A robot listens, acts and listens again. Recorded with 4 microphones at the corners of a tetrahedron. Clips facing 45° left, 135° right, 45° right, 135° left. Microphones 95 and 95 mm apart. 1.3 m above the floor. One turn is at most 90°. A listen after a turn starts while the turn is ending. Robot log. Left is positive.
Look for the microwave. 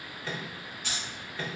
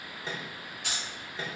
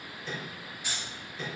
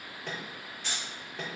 note: The microwave: 155° left.
cmd yaw +90
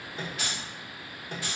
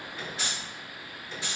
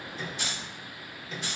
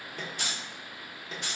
note: The microwave is now 75° left.
cmd yaw +75
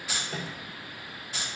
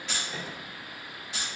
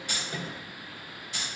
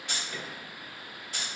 cmd idle
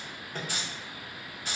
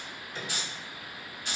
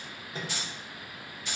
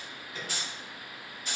note: The microwave is now 10° left.
cmd yaw +10
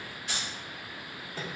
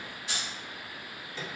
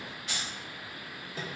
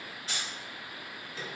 end: Facing the microwave.